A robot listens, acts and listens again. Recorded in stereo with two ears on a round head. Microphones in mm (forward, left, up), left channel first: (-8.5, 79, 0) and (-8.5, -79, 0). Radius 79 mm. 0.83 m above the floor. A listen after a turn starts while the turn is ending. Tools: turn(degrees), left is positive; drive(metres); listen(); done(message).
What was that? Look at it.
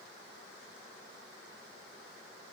listen()
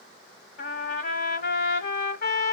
turn(degrees=60)
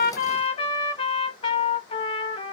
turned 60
turn(degrees=35)
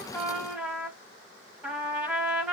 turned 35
turn(degrees=-15)
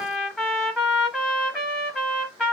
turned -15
done("Found it: a trumpet, straight ahead.")